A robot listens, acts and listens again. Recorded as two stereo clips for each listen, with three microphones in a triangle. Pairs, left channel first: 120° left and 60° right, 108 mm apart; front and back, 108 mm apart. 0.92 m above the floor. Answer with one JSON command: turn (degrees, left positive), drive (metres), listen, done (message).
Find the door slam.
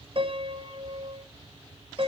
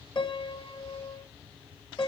{"listen": true}
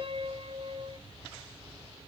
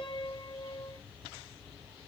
{"listen": true}
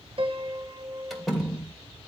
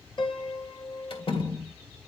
{"turn": 35}
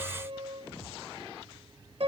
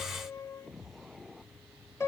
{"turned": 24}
{"turn": 10}
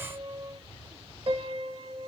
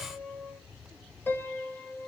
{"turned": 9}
{"done": "I heard a door slam from this way, but can't make it out now."}